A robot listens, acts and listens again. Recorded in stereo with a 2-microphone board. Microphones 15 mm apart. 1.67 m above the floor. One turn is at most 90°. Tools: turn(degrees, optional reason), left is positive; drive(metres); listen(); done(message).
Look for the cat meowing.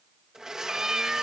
turn(degrees=-35, reason="The cat meowing: about 35° right or 145° right.")
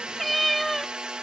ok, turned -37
done("Found it: a cat meowing, straight ahead.")